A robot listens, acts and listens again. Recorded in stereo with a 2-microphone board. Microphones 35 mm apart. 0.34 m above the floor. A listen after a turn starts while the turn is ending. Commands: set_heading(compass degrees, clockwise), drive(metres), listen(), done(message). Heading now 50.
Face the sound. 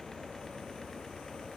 listen()
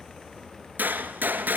set_heading(140)
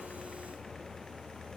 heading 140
done("I heard a gunshot from this way, but can't make it out now.")